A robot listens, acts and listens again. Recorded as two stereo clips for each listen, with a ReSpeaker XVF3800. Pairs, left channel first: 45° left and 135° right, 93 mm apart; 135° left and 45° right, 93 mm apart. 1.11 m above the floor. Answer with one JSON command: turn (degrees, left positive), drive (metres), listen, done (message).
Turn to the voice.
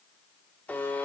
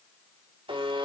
{"listen": true}
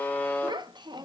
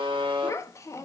{"turn": -170}
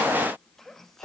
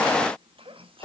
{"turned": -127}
{"turn": -40}
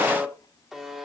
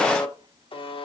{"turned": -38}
{"listen": true}
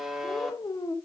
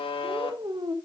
{"done": "Found it: a child speaking, straight ahead, under 1 m away."}